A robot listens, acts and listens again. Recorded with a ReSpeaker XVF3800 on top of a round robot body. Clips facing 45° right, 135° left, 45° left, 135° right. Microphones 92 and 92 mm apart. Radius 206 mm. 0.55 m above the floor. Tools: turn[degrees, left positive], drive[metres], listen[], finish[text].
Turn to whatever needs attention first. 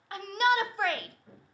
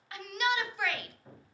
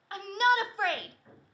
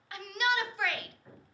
Action: finish[Found it: a shout, straight ahead.]